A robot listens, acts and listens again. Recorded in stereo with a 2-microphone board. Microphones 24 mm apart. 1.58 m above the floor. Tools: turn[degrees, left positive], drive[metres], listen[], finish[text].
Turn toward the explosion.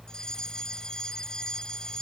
Action: listen[]
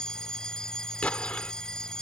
Action: turn[90]
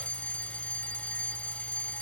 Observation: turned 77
Thought: Nothing new. It was at 15° left.
Action: turn[15]
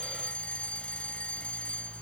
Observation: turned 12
Action: finish[Facing where the explosion came from. I can't hear it now.]